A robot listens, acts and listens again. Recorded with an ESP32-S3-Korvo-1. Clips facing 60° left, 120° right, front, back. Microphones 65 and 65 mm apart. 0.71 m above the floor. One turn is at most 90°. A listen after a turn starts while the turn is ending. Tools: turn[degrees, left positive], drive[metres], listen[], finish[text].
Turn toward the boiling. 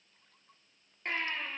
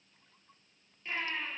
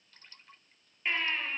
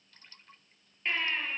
Action: listen[]
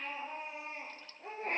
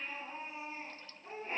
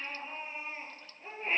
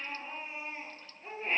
Action: listen[]
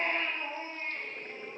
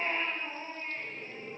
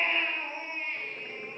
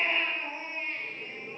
Thought: The boiling: 30° left.
Action: turn[30]
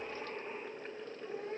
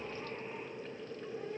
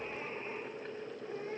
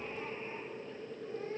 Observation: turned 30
Thought: The boiling is now 10° left.
Action: turn[10]
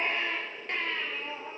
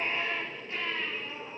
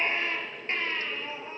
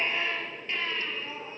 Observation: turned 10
Action: finish[Found it: boiling, straight ahead, 2 to 4 m away.]